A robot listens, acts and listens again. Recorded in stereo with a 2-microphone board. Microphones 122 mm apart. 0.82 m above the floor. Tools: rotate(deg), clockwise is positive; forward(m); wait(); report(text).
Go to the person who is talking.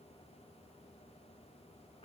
wait()
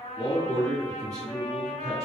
rotate(-30)
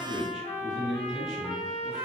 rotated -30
forward(1.0)
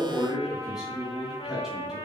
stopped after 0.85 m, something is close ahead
report("I am next to the man speaking.")